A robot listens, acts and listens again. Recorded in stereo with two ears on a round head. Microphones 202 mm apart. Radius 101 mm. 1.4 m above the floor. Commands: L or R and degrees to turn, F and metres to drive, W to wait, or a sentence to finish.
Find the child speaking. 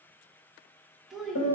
L30
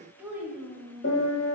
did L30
L30
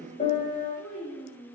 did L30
L30
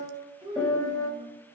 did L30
R20
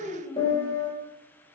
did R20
Found it: a child speaking, straight ahead.